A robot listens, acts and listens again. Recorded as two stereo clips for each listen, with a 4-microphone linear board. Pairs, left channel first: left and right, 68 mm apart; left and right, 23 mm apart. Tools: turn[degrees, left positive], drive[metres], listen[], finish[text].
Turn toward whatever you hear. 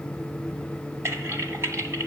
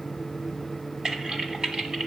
Thought: The typing on a keyboard: about 40° right or 140° right.
Action: turn[-40]
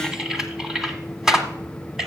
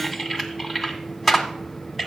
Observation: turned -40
Thought: So it is at 10° right.
Action: turn[-10]
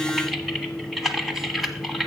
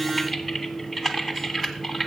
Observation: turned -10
Action: finish[Facing the typing on a keyboard.]